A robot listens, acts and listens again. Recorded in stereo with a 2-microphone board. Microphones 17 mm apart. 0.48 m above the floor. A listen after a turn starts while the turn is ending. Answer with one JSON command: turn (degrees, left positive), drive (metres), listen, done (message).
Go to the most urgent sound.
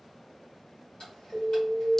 {"turn": 30}
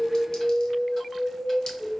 {"drive": 1.0}
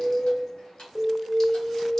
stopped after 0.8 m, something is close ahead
{"turn": 10}
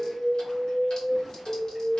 {"done": "Arrived at the alarm, straight ahead."}